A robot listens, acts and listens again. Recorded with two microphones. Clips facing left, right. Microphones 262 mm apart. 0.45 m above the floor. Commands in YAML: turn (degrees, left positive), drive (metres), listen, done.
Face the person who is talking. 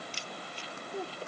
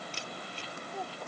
turn: 30
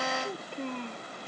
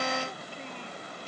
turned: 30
turn: 120
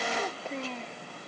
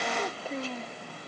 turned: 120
done: "Facing the child speaking."